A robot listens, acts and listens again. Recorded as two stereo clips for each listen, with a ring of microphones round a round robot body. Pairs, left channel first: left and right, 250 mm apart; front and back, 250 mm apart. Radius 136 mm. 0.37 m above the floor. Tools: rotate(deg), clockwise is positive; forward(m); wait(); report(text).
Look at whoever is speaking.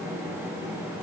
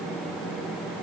wait()
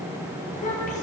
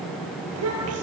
rotate(-155)
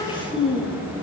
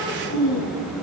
rotate(-20)
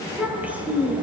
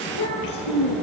report("Facing the child speaking, over 4 m away.")